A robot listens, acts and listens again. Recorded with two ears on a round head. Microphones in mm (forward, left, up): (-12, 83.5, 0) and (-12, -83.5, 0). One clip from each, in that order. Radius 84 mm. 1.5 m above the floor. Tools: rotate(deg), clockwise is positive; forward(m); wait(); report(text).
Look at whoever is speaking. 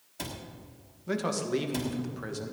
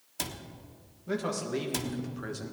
rotate(-30)
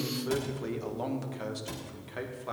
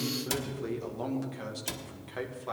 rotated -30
rotate(30)
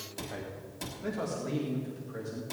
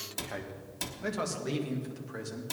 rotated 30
rotate(120)
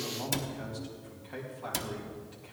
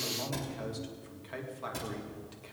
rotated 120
rotate(35)
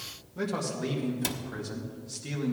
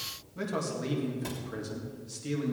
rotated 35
report("Found it: a man speaking, straight ahead.")